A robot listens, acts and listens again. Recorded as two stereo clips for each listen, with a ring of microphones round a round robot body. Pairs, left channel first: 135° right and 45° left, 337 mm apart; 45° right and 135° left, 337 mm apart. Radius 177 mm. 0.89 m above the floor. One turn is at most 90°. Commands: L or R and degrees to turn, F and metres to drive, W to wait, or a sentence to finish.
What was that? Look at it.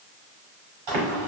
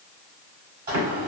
L65
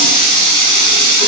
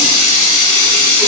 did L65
Facing the running tap.